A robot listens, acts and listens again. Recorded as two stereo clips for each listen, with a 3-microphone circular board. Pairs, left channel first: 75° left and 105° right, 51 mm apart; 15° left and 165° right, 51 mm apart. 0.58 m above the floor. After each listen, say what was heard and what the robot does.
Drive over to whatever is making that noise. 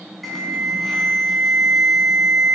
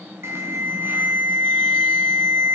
The alarm: 165° left. Turn 165° left.
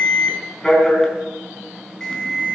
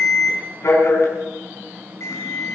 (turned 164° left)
Drive 1.0 m forward.
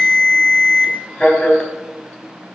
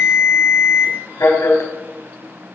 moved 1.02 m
Drive 1.0 m forward.
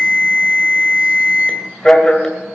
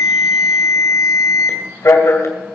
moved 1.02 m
Drive 1.0 m forward.
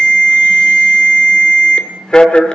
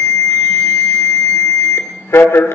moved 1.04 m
Drive 1.0 m forward.
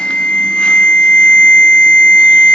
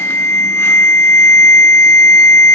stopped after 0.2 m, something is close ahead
The alarm is now 10° left. Turn 10° left.
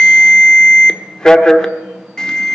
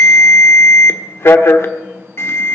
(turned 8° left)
Arrived at the alarm, straight ahead.